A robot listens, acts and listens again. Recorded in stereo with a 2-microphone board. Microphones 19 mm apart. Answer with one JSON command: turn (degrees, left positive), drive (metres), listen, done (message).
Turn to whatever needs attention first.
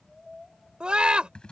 {"turn": -60}
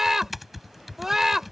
{"turn": -25}
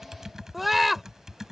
{"turn": -10}
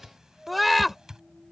{"done": "Found it: a scream, straight ahead."}